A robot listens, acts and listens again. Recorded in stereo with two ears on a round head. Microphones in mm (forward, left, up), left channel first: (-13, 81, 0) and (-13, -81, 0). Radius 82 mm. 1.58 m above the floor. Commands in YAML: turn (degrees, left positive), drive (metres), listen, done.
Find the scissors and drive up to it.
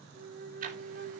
listen: true
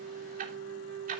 listen: true
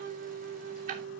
done: "I can't make out scissors to turn to."